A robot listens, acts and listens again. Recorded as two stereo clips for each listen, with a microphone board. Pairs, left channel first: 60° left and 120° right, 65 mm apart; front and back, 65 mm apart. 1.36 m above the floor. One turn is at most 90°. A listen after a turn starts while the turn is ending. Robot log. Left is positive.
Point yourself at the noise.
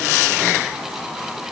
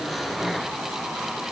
cmd idle
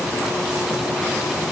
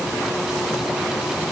cmd idle
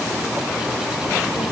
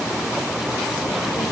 end: I can't make out anything to turn to.